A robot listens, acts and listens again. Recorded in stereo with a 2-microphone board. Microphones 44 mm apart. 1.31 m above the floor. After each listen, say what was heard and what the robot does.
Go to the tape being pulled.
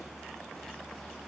Keep listening.
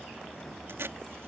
The tape being pulled: about 70° right or 110° right. Turn 70° right.
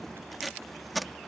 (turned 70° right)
Drive 1.0 m forward.
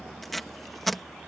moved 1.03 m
Drive 1.0 m forward.
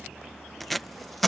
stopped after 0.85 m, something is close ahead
I am next to the tape being pulled.